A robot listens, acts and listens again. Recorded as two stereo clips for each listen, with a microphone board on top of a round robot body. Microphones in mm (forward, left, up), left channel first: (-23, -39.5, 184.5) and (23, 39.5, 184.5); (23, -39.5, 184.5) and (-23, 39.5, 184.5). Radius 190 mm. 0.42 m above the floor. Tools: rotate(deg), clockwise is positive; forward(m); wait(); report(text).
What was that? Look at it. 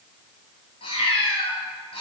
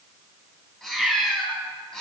rotate(140)
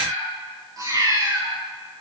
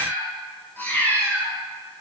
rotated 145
rotate(-10)
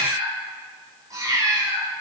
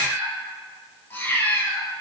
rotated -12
rotate(-10)
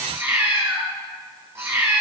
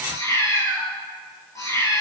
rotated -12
report("Found it: a cat meowing, straight ahead, over 4 m away.")